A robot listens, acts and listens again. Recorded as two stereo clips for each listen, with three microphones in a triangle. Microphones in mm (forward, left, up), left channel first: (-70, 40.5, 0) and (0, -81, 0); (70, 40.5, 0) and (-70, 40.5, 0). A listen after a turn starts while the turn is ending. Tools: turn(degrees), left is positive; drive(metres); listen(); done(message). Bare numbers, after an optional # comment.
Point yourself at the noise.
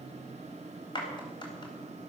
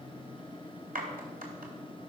# The clap: straight behind.
turn(180)
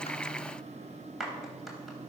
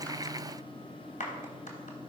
# The clap is now 30° left.
turn(30)
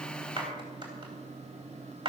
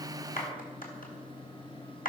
done("Found it: a clap, straight ahead, 2 to 4 m away.")